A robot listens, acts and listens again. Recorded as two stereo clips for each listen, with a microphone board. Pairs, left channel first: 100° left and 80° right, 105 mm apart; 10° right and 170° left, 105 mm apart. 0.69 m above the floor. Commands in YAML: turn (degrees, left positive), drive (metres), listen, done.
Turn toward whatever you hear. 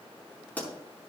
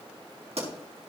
turn: 175
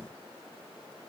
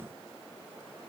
done: "I heard a pop from this way, but can't make it out now."